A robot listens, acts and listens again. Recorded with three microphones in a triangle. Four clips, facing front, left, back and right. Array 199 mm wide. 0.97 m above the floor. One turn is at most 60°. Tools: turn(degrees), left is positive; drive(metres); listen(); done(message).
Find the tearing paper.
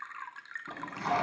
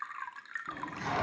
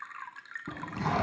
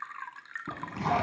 turn(degrees=-60)
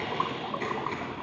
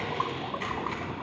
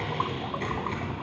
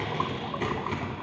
turn(degrees=-60)
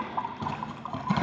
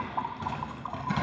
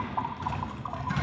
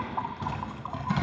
done("Facing the tearing paper.")